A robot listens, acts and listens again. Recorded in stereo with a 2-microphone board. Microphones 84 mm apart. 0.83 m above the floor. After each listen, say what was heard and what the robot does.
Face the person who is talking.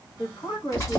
The woman speaking: about 70° left or 110° left. Turn 70° left.
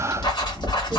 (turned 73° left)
Keep listening.
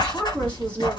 So it is at 15° left. Turn 15° left.
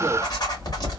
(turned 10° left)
Keep listening.
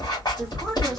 Keep listening.
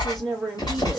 Facing the woman speaking, 1 to 2 m away.